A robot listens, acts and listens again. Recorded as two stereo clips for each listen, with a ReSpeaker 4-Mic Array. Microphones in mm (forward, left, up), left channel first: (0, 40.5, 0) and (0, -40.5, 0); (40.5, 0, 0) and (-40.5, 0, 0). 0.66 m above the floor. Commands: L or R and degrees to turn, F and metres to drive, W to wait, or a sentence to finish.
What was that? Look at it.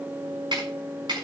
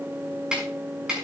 R100
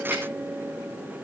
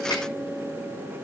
W
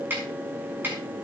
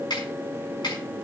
R25
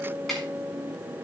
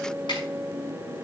W
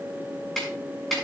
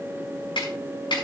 Facing the snare drum.